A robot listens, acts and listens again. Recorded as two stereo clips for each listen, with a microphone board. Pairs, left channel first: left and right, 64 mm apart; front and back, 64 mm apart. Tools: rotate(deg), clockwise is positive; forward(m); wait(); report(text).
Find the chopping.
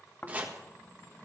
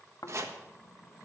rotate(150)
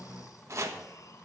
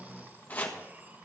rotate(60)
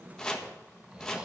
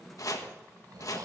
rotate(-15)
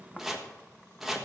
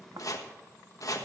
report("Found it: chopping, straight ahead.")